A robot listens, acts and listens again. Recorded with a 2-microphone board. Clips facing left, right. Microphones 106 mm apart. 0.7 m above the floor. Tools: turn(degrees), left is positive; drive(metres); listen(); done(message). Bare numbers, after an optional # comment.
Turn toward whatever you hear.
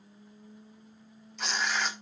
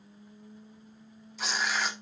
turn(30)
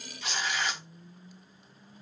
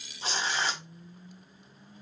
# So it is at 35° right.
turn(-35)
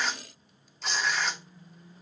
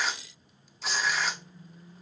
done("Found it: tearing paper, straight ahead.")